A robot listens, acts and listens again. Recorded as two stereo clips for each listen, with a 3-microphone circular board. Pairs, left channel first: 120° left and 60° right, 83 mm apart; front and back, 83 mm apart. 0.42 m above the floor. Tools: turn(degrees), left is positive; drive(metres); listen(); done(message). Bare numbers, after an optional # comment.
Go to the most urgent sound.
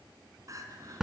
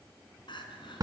# The crying: 15° right.
turn(-15)
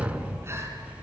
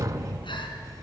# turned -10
listen()
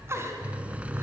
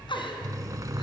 listen()
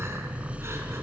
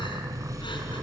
done("I heard crying from this way, but can't make it out now. I did not reach it.")